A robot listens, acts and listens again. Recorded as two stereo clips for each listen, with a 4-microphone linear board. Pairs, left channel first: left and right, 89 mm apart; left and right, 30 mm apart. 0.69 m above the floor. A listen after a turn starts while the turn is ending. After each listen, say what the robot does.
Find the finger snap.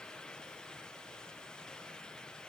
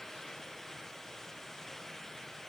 Keep listening.
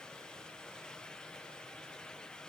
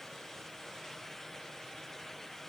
Keep listening.
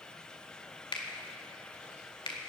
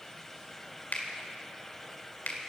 Turn 75° left.
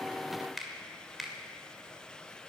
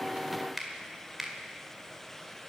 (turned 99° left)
Found it: a finger snap, straight ahead, 2 to 4 m away.